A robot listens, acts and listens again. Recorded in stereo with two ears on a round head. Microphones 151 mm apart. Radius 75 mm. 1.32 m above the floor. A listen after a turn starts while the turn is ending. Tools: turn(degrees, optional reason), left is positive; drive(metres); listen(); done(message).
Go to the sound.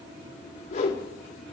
turn(degrees=40, reason="The whoosh: about 40° left or 140° left.")
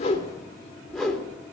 drive(metres=1.0)
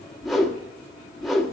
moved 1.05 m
drive(metres=1.0)
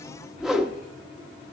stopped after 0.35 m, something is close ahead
done("Arrived at the whoosh, straight ahead.")